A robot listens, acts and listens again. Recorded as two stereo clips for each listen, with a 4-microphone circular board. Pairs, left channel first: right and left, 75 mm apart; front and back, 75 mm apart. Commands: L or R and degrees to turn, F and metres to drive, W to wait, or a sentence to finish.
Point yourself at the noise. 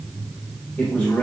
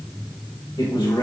R15
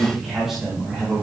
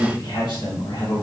L15
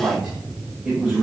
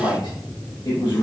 L15
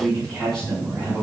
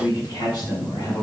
L10
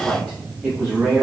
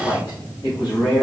Facing the man speaking.